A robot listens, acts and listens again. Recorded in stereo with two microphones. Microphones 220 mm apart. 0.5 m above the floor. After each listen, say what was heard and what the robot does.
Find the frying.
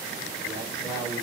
Keep listening.
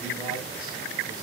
Keep listening.
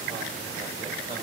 I can't make out frying, only a man speaking.